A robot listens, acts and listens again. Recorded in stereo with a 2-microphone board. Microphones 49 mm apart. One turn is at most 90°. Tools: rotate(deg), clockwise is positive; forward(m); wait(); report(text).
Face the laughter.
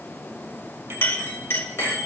wait()
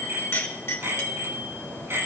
wait()
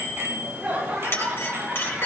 rotate(30)
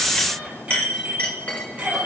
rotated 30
wait()
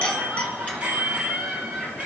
report("Found it: laughter, straight ahead.")